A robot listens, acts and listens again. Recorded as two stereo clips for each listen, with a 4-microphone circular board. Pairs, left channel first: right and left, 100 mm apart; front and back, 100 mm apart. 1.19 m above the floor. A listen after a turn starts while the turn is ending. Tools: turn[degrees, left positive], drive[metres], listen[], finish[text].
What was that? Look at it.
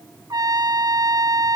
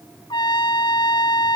Thought: The trumpet: 40° left.
Action: turn[40]
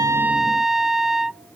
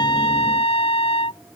Action: finish[Found it: a trumpet, straight ahead.]